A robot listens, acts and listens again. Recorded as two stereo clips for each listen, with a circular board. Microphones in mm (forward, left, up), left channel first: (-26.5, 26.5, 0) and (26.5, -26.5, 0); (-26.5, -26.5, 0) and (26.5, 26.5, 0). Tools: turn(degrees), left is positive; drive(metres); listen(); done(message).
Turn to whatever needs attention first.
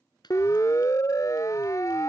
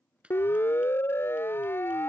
turn(degrees=170)
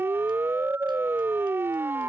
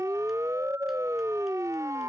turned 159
turn(degrees=10)
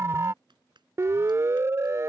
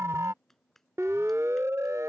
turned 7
done("Facing the siren.")